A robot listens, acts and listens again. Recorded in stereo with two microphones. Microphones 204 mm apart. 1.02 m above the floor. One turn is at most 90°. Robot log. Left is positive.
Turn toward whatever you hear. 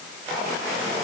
cmd idle
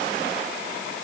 cmd idle
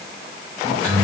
cmd yaw -90
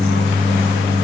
end: Facing the microwave, 1 to 2 m away.